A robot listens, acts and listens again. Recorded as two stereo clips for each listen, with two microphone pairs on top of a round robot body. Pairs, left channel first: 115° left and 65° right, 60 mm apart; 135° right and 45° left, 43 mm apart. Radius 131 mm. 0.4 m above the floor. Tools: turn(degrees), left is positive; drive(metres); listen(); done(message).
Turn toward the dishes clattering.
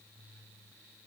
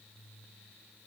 listen()
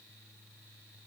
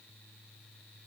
listen()
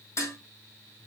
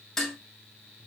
turn(degrees=145)
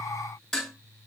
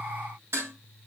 turn(degrees=35)
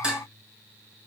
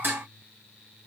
done("Facing the dishes clattering, over 4 m away.")